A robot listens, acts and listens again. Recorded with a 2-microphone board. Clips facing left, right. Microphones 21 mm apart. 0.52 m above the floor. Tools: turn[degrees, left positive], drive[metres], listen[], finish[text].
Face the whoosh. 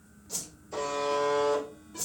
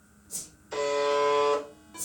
Thought: The whoosh: about 45° left or 135° left.
Action: turn[45]
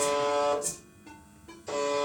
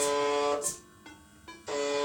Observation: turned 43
Thought: So it is at 10° left.
Action: turn[10]
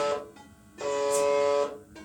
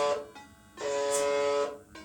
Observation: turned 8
Action: listen[]
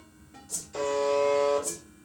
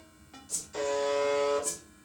Action: finish[Found it: a whoosh, straight ahead, 1 to 2 m away.]